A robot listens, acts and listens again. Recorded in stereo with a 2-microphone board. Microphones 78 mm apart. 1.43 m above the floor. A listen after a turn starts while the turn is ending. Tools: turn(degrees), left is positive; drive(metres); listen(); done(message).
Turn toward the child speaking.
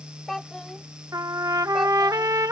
turn(degrees=30)
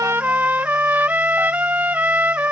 listen()
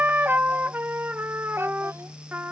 listen()
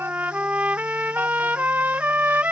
done("I heard a child speaking, but can't make it out now. It was about 30° right or 150° left.")